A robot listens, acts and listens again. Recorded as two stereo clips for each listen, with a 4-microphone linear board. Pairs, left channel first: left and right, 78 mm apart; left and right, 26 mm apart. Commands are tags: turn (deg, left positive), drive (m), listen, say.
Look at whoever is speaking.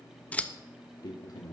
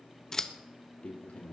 <turn deg="60"/>
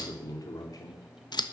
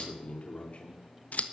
<turn deg="55"/>
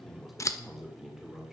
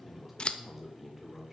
<say>Found it: a man speaking, straight ahead, 2 to 4 m away.</say>